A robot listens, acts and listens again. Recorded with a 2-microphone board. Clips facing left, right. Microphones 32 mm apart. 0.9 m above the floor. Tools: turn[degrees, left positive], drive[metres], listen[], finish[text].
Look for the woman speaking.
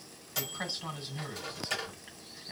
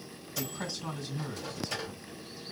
Thought: The woman speaking: about 40° left or 140° left.
Action: turn[40]
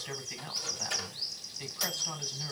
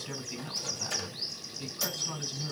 Thought: So it is at 100° left.
Action: turn[100]
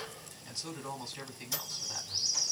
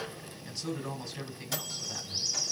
Action: finish[Found it: a woman speaking, straight ahead.]